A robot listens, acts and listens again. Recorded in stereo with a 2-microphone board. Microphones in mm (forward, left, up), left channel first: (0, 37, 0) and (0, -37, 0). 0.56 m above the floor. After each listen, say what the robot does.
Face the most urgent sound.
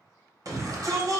Turn 55° right.
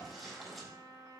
Keep listening.
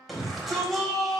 Found it: a shout, straight ahead, 2 to 4 m away.